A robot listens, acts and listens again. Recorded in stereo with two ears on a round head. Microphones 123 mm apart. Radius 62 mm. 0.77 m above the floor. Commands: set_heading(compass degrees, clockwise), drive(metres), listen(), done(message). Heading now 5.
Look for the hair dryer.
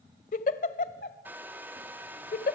set_heading(35)
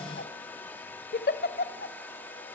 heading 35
set_heading(20)
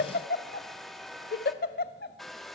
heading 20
done("Facing the hair dryer, 1 to 2 m away.")